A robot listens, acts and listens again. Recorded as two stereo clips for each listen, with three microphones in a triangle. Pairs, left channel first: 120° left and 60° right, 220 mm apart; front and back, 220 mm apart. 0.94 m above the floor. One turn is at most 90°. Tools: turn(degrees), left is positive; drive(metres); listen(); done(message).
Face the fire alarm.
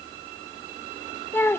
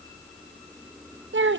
listen()
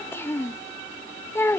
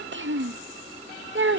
listen()
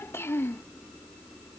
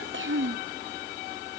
done("I can't make out a fire alarm to turn to.")